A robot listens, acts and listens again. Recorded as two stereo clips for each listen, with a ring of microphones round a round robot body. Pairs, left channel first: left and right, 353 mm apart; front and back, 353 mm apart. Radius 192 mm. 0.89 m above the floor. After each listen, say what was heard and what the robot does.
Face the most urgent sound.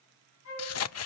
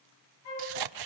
Keep listening.
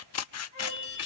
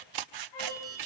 The alarm: 100° left. Turn 100° left.
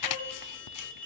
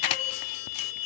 Facing the alarm.